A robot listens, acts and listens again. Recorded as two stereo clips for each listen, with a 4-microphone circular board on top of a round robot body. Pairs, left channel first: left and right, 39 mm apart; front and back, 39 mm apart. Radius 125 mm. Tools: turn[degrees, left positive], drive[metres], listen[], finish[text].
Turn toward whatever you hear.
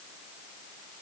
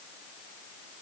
Action: listen[]
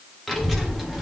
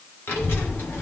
Action: finish[Facing the child speaking.]